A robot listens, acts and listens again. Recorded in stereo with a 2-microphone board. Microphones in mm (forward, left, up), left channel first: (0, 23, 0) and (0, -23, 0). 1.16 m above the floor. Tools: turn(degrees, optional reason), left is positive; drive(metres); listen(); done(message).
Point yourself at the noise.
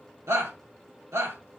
turn(degrees=-90)
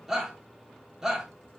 done("Found it: a shout, straight ahead.")